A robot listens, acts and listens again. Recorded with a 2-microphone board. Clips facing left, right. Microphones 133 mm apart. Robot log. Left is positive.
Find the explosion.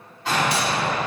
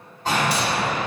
note: The explosion: about 45° right or 135° right.
cmd yaw -45
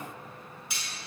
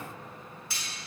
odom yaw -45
cmd idle
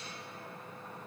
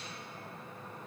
end: I heard an explosion, but can't make it out now. It was about straight ahead or 90° right.